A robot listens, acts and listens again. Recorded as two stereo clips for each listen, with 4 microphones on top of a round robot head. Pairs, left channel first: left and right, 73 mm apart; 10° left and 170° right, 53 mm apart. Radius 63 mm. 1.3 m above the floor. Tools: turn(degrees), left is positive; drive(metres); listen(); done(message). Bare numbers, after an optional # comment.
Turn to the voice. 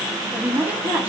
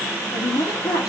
# The woman speaking: 20° right.
turn(-20)
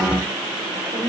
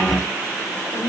done("Found it: a woman speaking, straight ahead.")